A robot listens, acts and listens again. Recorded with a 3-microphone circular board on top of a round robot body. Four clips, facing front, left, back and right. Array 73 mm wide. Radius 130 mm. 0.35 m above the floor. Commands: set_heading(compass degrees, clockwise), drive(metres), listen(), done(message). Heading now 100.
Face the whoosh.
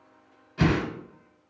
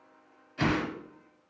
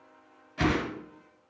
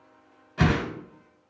set_heading(195)
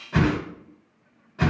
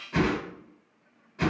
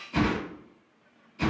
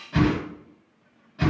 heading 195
done("Facing the whoosh.")